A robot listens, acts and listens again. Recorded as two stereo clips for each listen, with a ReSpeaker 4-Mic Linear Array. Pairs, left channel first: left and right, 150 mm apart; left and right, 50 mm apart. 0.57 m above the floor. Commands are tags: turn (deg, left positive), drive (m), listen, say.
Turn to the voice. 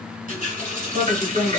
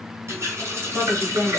<turn deg="-40"/>
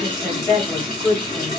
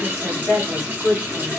<say>Facing the woman speaking, 2 to 4 m away.</say>